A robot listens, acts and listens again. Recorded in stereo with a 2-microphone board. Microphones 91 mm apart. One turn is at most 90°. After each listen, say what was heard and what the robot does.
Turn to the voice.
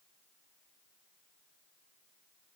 Keep listening.
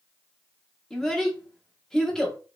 Turn 30° left.
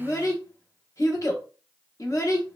So it is at 145° left. Turn 90° left.
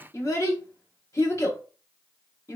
The child speaking is now 35° left. Turn 35° left.
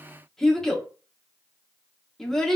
Facing the child speaking, under 1 m away.